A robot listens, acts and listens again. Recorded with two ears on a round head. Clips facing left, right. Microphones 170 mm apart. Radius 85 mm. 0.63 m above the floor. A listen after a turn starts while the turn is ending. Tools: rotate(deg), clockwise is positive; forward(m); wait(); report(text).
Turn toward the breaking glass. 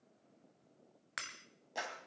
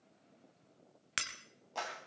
rotate(35)
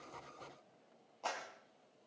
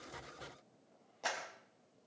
wait()
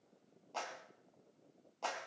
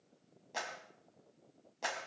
report("I heard breaking glass, but can't make it out now. It was about straight ahead or 110° right.")